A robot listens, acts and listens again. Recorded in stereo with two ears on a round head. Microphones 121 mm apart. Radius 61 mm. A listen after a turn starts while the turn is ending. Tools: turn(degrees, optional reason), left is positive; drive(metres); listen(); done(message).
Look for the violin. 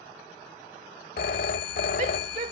listen()
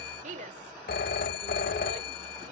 listen()
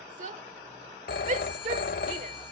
done("I can't make out a violin to turn to.")